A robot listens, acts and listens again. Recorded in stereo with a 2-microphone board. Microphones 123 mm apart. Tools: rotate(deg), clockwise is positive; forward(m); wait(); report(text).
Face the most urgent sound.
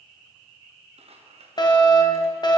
rotate(-35)
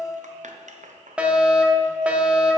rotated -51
rotate(10)
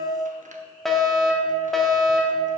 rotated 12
report("Found it: a fire alarm, straight ahead, 1 to 2 m away.")